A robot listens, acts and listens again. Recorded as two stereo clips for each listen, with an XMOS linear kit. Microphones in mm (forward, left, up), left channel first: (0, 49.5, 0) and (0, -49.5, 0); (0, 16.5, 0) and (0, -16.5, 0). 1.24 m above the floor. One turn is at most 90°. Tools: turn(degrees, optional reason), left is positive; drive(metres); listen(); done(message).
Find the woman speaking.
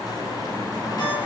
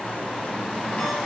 listen()
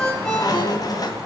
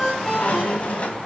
listen()
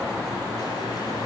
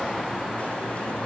done("I can't make out a woman speaking, only a ringtone and a squeak.")